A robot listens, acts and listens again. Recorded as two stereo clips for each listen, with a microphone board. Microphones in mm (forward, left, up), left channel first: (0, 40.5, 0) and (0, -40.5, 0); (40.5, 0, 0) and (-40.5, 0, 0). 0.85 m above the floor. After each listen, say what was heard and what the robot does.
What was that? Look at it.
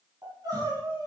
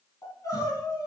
The crying: 45° right. Turn 45° right.
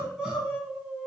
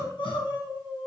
Facing the crying.